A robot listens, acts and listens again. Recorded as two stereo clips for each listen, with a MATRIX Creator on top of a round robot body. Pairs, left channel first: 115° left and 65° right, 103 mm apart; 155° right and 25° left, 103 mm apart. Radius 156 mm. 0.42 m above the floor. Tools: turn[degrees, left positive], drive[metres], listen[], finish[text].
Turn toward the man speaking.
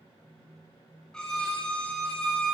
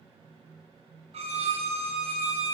Action: listen[]
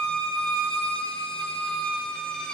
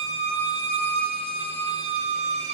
Action: listen[]
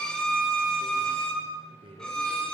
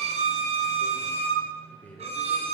Thought: The man speaking: 80° right.
Action: turn[-80]
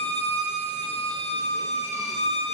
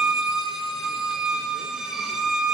Action: listen[]
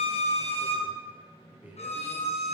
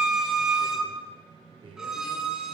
Action: finish[Facing the man speaking, 1 to 2 m away.]